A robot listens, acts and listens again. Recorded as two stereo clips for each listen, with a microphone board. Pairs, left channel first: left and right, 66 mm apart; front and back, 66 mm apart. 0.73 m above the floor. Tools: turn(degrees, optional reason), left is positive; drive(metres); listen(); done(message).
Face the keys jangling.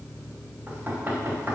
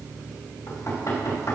listen()
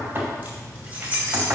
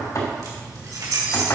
turn(degrees=-160, reason="The keys jangling: 160° right.")
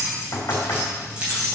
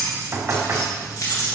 turn(degrees=-20, reason="The keys jangling is now 20° right.")
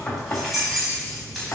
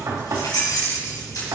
done("Facing the keys jangling.")